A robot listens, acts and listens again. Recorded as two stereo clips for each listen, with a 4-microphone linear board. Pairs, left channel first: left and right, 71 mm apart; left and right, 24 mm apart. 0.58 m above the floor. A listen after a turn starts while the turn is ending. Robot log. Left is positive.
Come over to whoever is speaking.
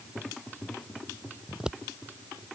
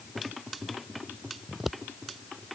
cmd idle
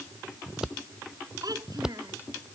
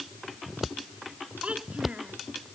note: The child speaking: about 65° right or 115° right.
cmd yaw -65
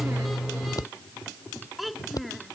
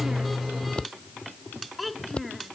cmd fwd 1.0
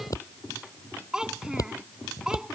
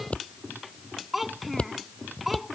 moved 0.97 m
note: The child speaking is now 10° right.
cmd yaw -10
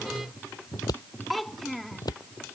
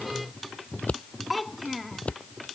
cmd fwd 1.0
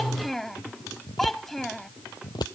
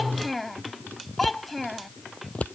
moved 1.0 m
cmd fwd 1.0
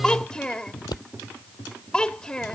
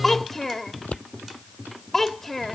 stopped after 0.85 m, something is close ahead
note: The child speaking is now 15° left.
cmd yaw +15
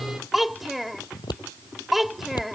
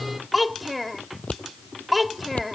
end: Arrived at the child speaking, straight ahead.